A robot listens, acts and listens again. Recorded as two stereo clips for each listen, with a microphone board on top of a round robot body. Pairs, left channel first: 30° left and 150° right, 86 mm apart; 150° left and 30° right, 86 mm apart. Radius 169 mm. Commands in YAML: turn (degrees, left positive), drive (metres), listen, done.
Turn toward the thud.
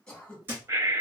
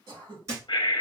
turn: -85
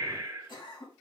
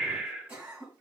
done: "I heard a thud from this way, but can't make it out now."